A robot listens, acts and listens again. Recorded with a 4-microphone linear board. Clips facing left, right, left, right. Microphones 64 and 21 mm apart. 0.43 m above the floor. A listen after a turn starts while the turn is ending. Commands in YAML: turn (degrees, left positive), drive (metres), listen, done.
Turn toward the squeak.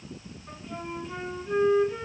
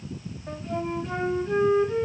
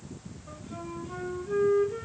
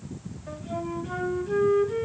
listen: true
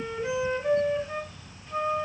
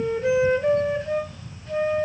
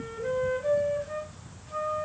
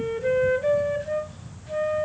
listen: true
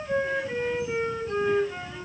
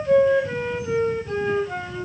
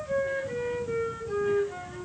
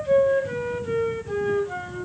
done: "I can't make out a squeak to turn to."